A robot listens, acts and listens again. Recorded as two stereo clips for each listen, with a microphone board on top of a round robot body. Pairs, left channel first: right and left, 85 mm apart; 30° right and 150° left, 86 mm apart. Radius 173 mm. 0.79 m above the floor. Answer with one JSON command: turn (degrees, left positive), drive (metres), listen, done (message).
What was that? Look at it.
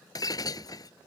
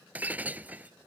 {"turn": -135}
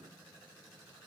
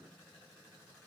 {"done": "Facing where the breaking glass came from. I can't hear it now."}